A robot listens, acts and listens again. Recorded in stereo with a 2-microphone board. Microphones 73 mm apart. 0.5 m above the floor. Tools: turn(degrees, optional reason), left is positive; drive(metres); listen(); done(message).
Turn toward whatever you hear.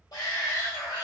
turn(degrees=65, reason="The shout: about 65° left or 115° left.")
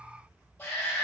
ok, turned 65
turn(degrees=25, reason="So it is at 25° left.")
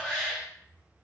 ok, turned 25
done("Found it: a shout, straight ahead.")